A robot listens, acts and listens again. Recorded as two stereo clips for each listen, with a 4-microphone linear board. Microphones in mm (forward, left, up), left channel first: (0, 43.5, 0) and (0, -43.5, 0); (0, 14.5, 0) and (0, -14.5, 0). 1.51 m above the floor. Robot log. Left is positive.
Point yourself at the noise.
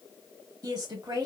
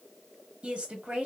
note: The woman speaking: about 55° right or 125° right.
cmd yaw -55
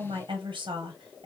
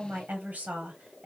note: So it is at 70° right.
cmd yaw -70
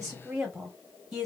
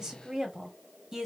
end: Found it: a woman speaking, straight ahead, under 1 m away.